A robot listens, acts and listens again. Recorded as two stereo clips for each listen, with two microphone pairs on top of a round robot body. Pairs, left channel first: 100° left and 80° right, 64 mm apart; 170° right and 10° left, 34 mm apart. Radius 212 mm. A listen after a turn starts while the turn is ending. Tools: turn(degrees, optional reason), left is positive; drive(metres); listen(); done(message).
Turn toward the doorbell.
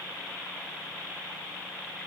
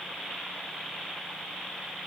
listen()
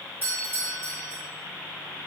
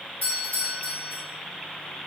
turn(degrees=-135, reason="The doorbell: 135° right.")
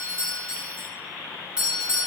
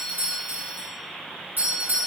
done("Facing the doorbell.")